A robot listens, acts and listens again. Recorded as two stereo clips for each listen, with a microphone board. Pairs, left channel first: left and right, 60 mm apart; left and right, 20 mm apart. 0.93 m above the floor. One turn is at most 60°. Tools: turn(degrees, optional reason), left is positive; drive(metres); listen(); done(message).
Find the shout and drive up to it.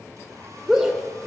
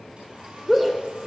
turn(degrees=-30)
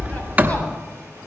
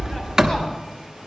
listen()
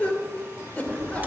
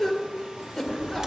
turn(degrees=20, reason="So it is at 20° left.")
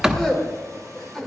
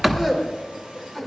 drive(metres=1.0)
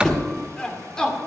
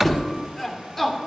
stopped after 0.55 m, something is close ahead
turn(degrees=10, reason="The shout is now 10° left.")
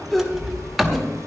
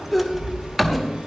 done("Something is in my way. I am facing the shout but have not reached it.")